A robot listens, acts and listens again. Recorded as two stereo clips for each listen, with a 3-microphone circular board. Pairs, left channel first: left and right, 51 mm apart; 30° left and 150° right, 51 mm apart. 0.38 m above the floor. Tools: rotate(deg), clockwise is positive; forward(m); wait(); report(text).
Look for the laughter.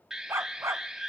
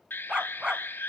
wait()
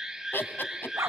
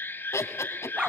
rotate(-50)
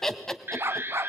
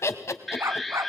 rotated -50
rotate(-10)
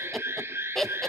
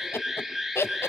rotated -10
rotate(-10)
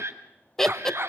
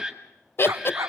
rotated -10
rotate(-15)
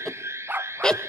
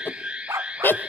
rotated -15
rotate(-25)
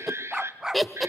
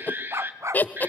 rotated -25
report("Facing the laughter, 1 to 2 m away.")